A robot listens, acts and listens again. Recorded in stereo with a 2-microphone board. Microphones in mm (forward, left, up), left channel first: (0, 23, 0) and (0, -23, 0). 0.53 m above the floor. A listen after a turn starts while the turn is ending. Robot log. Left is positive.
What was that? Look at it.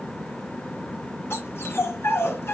note: The dog barking: about 65° left or 115° left.
cmd yaw +65
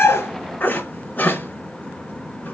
note: So it is at 45° left.
cmd yaw +45
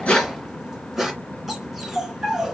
end: Found it: a dog barking, straight ahead.